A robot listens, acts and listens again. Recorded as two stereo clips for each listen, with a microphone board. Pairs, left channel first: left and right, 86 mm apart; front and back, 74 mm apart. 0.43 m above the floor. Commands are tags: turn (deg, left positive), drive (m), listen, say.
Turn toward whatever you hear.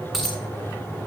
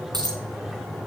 <turn deg="-175"/>
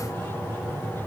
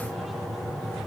<say>I heard a dropped coin from this way, but can't make it out now.</say>